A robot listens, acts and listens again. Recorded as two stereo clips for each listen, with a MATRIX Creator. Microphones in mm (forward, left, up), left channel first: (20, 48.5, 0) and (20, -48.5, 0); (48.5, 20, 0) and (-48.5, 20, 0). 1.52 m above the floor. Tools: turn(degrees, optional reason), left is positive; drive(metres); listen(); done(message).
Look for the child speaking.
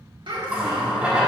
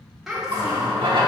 turn(degrees=-100, reason="The child speaking: 100° right.")
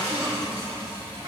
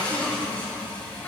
turn(degrees=-70, reason="The child speaking is now 70° right.")
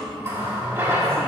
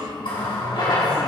turn(degrees=-40, reason="The child speaking is now 40° right.")
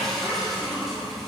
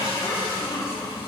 turn(degrees=-35, reason="The child speaking is now 35° right.")
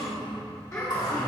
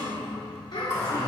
turn(degrees=15, reason="The child speaking is now 15° left.")
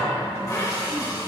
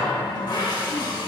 listen()
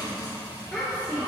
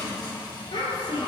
done("Facing the child speaking, 2 to 4 m away.")